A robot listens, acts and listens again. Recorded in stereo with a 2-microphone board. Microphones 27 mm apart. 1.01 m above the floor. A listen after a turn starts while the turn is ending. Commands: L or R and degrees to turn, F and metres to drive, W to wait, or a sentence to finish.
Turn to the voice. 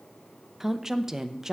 R20
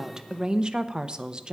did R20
R140
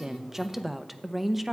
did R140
R10
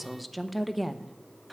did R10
Facing the woman speaking, under 1 m away.